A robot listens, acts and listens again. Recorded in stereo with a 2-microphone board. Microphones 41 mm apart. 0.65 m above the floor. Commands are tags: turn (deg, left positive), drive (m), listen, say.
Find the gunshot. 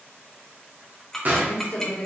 <turn deg="-40"/>
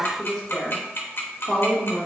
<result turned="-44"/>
<listen/>
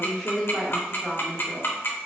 <say>I heard a gunshot, but can't make it out now. It was about straight ahead or 95° right.</say>